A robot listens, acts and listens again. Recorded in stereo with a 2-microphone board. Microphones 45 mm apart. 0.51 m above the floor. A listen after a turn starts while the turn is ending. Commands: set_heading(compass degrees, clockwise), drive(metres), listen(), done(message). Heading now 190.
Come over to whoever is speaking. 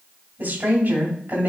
set_heading(230)
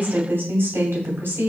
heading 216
set_heading(326)
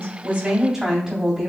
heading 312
set_heading(327)
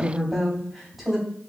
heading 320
drive(1.0)
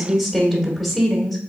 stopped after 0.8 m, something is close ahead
done("I am next to the woman speaking.")